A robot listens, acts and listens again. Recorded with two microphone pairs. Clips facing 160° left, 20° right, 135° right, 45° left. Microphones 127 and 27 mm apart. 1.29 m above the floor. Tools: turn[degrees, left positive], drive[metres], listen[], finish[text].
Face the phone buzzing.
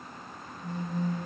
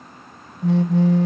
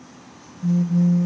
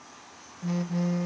Thought: The phone buzzing: 10° right.
Action: turn[-10]
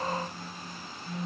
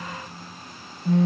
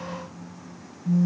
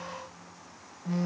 Action: finish[Found it: a phone buzzing, straight ahead, under 1 m away.]